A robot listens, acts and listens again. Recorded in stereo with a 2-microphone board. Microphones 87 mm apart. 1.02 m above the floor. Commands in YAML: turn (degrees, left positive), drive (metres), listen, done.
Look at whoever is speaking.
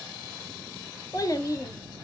turn: 40
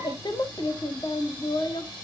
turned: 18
turn: 120
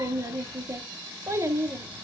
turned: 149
turn: -30
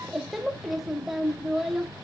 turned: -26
done: "Facing the child speaking, 1 to 2 m away."